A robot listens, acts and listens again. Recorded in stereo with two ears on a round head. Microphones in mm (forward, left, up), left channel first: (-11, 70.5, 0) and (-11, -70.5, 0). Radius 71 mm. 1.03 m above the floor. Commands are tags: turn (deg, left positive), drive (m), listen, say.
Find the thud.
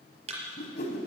<turn deg="-40"/>
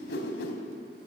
<listen/>
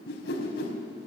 <say>I heard a thud, but can't make it out now. It was about straight ahead or 100° right.</say>